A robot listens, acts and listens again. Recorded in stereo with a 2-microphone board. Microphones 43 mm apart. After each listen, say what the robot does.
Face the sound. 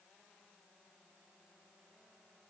Keep listening.
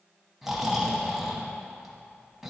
Turn 30° right.
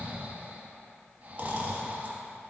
Turn 145° right.
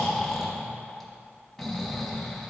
Facing the snoring.